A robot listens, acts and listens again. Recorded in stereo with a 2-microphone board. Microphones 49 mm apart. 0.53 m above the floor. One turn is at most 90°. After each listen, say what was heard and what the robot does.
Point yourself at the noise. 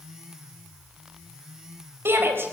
The shout: about 55° right or 125° right. Turn 55° right.
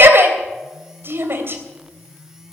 So it is at 60° right. Turn 60° right.
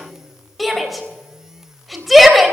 Facing the shout, 2 to 4 m away.